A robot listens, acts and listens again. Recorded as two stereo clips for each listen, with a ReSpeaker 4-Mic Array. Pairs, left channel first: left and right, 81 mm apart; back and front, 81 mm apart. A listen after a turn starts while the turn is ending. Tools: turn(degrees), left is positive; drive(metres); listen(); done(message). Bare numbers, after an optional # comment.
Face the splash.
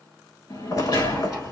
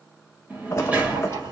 # The splash: 130° left.
turn(130)
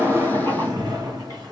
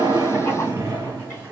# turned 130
done("I heard a splash from this way, but can't make it out now.")